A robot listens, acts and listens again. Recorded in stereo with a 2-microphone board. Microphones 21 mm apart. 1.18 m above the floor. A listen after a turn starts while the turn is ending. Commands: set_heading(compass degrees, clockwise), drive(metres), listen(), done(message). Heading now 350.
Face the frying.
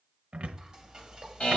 set_heading(25)
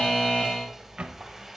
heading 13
set_heading(23)
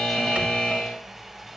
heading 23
done("Facing the frying, 2 to 4 m away.")